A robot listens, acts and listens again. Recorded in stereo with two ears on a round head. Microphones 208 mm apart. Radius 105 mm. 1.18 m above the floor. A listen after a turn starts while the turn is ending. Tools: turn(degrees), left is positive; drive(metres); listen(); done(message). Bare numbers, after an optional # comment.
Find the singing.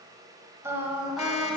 turn(30)
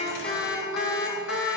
# So it is at 115° left.
turn(115)
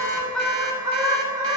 # The singing is now 15° right.
turn(-15)
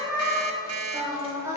# The singing is now 15° right.
turn(-15)
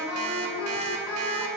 done("Found it: singing, straight ahead.")